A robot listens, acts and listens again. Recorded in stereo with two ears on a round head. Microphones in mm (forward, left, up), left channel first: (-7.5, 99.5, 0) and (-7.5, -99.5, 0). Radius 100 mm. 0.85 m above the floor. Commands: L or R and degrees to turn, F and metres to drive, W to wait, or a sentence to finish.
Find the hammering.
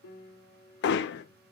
L55
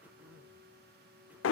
L65
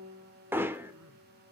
R10
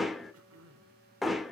Facing the hammering, under 1 m away.